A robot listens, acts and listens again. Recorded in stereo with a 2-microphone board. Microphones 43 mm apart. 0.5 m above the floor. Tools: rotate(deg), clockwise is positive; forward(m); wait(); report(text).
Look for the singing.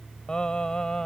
rotate(-20)
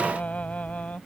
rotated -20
rotate(-35)
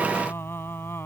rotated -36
rotate(-115)
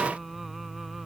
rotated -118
report("Found it: singing, straight ahead.")